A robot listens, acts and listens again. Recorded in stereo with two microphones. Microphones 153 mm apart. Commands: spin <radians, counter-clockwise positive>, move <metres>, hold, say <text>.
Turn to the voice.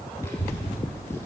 spin 0.26
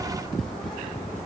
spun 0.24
spin 0.52
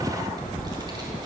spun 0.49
spin -0.52
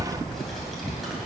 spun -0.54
say Found it: a child speaking, straight ahead, 2 to 4 m away.